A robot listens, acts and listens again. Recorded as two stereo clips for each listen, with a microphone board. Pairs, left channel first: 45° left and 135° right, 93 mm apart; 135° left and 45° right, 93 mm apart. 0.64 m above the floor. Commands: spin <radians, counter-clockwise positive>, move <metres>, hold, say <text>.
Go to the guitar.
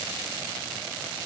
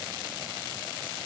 hold
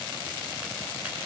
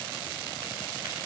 hold
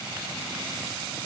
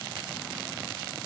say I can't make out a guitar.